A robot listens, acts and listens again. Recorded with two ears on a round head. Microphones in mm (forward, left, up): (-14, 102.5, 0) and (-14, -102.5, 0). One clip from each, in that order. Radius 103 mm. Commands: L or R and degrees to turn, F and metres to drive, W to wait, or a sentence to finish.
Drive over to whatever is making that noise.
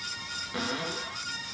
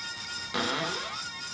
R35
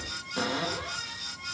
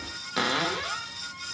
R110
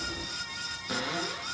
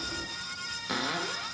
R20
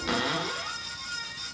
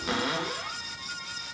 F1.0
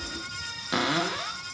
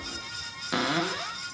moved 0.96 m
L10
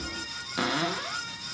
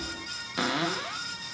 F1.0
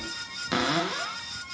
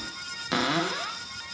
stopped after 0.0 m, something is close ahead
Arrived at the cupboard door, straight ahead.